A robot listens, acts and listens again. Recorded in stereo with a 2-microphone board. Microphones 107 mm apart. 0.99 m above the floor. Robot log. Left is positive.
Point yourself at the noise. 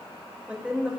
cmd yaw -30
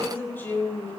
note: So it is at 20° left.
cmd yaw +20
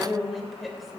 end: Facing the woman speaking, 2 to 4 m away.